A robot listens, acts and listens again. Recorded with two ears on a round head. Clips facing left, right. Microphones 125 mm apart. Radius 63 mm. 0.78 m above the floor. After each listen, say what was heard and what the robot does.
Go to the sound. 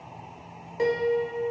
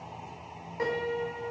The piano: about 30° left or 150° left. Turn 30° left.
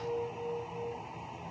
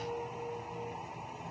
Drive 1.0 m forward.
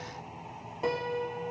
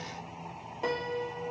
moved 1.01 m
Drive 1.0 m forward.
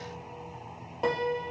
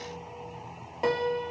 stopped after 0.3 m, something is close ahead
Arrived at the piano, straight ahead.